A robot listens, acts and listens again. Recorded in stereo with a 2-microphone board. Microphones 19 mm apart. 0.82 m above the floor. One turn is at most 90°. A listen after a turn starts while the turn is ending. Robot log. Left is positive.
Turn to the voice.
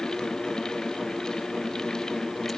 cmd idle
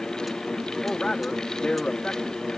note: The man speaking: about 65° left or 115° left.
cmd yaw +65
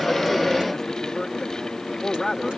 note: So it is at 20° left.
cmd yaw +20
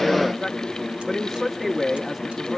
end: Found it: a man speaking, straight ahead, 1 to 2 m away.